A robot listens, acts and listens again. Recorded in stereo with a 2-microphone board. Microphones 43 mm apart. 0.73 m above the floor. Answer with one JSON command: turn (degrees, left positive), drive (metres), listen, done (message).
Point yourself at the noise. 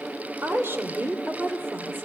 {"turn": -50}
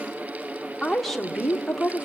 {"turn": 10}
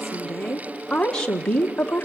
{"turn": 30}
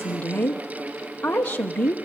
{"turn": 30}
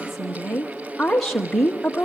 {"done": "Facing the woman speaking, 1 to 2 m away."}